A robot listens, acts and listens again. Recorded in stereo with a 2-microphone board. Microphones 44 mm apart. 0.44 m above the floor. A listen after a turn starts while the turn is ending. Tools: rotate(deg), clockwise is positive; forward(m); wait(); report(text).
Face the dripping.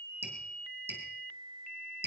rotate(55)
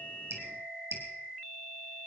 rotate(75)
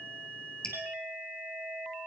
rotate(-20)
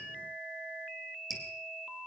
report("Facing the dripping, 2 to 4 m away.")